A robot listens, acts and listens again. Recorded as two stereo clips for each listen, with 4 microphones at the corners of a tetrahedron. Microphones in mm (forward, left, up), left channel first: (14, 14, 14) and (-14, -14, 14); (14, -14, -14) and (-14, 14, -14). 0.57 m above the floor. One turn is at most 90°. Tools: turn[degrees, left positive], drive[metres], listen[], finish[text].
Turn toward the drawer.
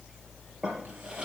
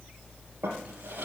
Thought: The drawer: 155° left.
Action: turn[90]
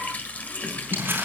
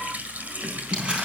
Thought: Nothing new. It was at 65° left.
Action: turn[65]
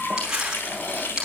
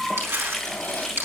Action: finish[Found it: a drawer, straight ahead.]